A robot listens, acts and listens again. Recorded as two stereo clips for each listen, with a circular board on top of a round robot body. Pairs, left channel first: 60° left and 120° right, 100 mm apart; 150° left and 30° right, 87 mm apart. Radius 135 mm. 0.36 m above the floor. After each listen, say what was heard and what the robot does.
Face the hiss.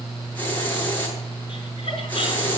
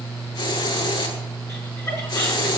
The hiss: 130° left. Turn 130° left.
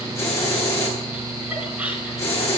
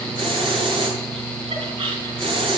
Found it: a hiss, straight ahead.